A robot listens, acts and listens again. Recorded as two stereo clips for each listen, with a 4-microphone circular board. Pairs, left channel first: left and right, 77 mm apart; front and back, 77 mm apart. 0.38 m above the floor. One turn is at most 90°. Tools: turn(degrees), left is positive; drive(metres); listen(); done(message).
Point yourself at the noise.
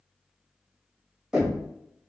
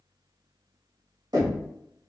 turn(degrees=-90)
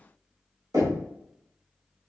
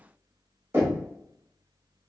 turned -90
turn(degrees=-90)
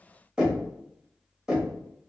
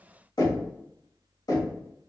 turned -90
turn(degrees=-10)
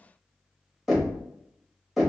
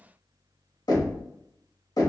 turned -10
done("Facing the knocking, under 1 m away.")